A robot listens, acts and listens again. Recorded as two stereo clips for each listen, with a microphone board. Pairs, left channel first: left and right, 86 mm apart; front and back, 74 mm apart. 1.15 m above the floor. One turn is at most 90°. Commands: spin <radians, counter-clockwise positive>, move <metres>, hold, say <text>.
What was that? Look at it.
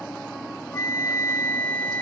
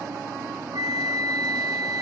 spin 1.57
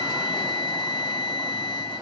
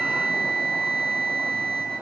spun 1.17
spin 1.40
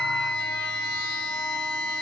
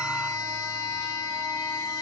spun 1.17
spin 0.17
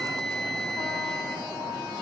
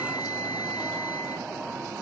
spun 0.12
say Found it: a flute, straight ahead.